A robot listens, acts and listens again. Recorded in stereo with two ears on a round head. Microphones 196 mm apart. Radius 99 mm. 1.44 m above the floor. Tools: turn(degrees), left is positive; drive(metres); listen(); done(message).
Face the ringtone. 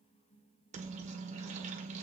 listen()
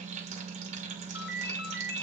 turn(degrees=50)
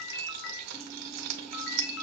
turn(degrees=70)
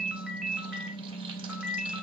done("Facing the ringtone, 1 to 2 m away.")